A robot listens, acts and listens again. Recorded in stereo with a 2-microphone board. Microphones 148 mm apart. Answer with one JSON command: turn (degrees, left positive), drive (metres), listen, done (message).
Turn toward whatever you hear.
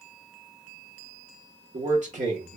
{"turn": -50}
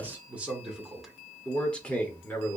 {"turn": 15}
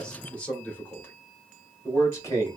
{"turn": 20}
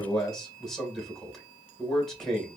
{"done": "Found it: a man speaking, straight ahead, 1 to 2 m away."}